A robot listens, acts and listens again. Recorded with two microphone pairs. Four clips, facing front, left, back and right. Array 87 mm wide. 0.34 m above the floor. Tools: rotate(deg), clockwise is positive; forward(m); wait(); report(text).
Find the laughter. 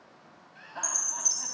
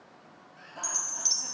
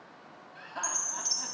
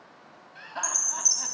rotate(95)
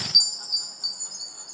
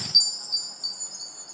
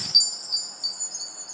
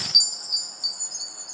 wait()
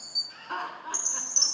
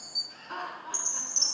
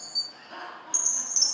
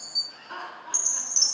report("Facing the laughter, 2 to 4 m away.")